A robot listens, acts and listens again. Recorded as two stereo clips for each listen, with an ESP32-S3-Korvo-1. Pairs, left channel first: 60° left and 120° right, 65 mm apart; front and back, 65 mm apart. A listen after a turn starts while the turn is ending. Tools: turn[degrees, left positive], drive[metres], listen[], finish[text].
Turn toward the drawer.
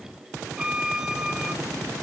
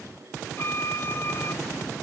Action: listen[]
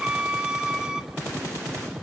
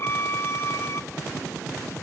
Action: listen[]
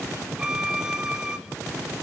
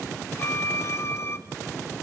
Action: finish[I can't make out a drawer, only a violin.]